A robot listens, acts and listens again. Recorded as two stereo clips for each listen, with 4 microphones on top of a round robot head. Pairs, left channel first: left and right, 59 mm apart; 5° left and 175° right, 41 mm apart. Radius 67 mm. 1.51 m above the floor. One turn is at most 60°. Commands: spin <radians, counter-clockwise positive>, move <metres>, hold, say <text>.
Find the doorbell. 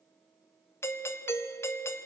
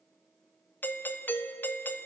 spin 0.79
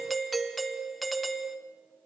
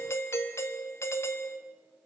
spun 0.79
say Facing the doorbell.